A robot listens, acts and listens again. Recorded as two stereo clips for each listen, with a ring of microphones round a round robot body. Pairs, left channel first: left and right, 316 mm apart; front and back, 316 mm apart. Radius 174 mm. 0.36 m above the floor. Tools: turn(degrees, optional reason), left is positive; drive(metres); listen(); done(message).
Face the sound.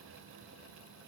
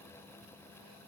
listen()
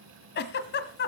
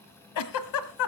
turn(degrees=30, reason="The giggle: 30° left.")
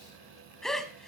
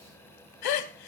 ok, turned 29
done("Facing the giggle.")